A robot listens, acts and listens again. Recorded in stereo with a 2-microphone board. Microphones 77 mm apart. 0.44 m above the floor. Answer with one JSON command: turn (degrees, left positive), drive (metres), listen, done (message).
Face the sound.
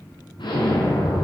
{"turn": 90}
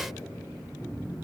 {"done": "I heard an explosion from this way, but can't make it out now."}